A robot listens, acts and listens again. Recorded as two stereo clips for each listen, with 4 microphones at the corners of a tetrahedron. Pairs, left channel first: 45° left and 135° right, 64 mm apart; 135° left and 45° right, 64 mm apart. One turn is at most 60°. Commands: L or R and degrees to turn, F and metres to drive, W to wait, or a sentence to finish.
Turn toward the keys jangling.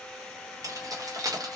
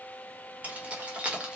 R60
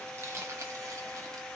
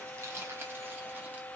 R60
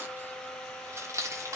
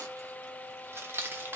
R60
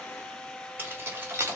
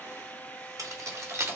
R60
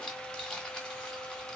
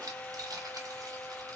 R30
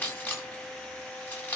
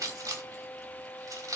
R15
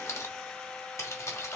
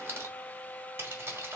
Facing the keys jangling, 1 to 2 m away.